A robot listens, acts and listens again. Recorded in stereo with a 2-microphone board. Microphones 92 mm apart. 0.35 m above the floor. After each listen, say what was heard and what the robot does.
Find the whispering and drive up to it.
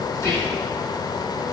The whispering: about 35° left or 145° left. Turn 35° left.
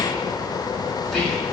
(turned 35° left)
Drive 1.0 m forward.
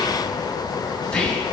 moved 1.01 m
The whispering is now 10° left. Turn 10° left.
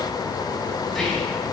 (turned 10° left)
Drive 1.0 m forward.
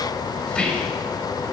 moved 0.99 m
The whispering is now 15° left. Turn 15° left.
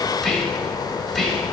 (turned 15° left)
Drive 1.0 m forward.
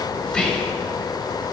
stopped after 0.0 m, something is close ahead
The whispering is now 10° left. Turn 10° left.
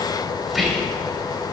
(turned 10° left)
Arrived at the whispering, straight ahead.